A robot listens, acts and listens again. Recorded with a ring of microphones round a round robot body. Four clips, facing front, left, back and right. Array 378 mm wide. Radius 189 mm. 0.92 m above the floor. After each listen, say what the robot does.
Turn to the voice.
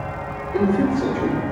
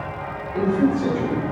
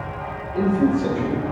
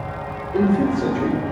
Turn 30° right.
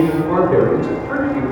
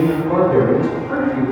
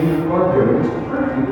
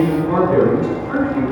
Facing the man speaking.